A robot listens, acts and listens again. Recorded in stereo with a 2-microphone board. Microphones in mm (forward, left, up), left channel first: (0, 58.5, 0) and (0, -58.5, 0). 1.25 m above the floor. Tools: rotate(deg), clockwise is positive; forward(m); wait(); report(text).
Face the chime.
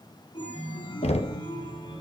rotate(-45)
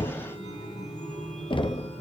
rotate(-90)
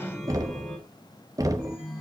report("Facing the chime.")